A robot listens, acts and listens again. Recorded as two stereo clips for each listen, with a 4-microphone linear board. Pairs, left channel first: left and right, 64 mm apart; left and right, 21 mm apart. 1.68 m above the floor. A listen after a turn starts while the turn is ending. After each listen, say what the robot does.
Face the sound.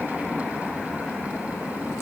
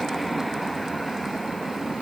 Keep listening.
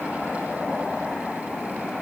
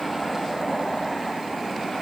Keep listening.
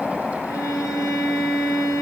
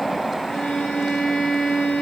Turn 60° left.
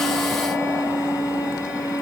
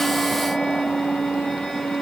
Turn 60° left.
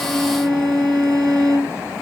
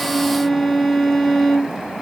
Turn 10° left.
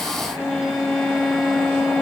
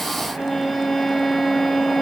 Facing the violin.